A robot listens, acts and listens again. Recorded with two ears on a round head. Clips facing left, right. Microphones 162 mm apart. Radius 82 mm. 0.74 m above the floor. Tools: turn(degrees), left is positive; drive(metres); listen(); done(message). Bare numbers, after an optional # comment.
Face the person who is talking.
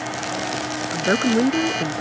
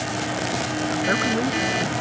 # The woman speaking: about 30° left or 150° left.
turn(30)
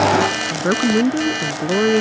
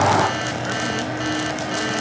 # So it is at 115° left.
turn(115)
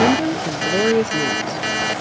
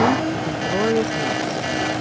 # The woman speaking is now 15° left.
turn(15)
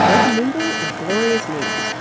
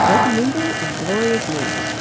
done("Facing the woman speaking.")